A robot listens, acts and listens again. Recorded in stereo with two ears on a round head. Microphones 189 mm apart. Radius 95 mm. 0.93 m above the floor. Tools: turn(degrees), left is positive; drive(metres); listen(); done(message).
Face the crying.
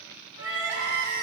turn(degrees=-60)
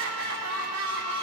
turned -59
turn(degrees=-60)
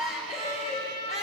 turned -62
done("Found it: crying, straight ahead.")